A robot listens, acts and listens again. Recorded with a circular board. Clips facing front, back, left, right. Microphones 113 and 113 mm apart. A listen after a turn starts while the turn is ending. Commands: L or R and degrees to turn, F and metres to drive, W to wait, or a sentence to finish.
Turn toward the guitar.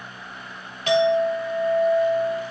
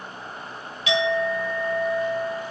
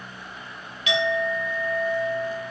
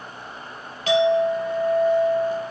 W
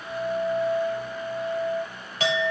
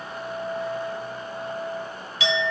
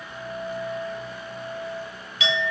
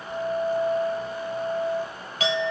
W
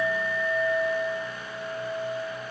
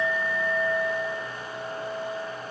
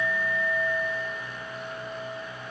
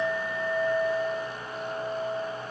I can't make out a guitar to turn to.